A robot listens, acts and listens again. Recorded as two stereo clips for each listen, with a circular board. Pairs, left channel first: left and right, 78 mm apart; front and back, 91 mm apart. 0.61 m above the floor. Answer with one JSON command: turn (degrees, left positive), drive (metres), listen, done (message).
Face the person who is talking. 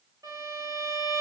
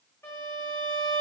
{"listen": true}
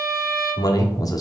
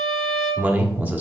{"turn": 115}
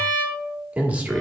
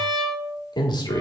{"turn": -20}
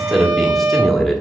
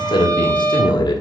{"done": "Facing the man speaking."}